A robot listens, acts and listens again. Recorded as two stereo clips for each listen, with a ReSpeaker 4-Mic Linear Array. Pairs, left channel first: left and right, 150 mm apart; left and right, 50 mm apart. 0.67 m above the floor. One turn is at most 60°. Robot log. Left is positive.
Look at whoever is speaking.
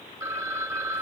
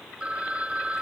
cmd idle
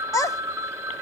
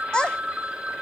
note: The child speaking: about 20° left or 160° left.
cmd yaw +20
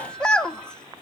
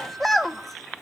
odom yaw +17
end: Facing the child speaking.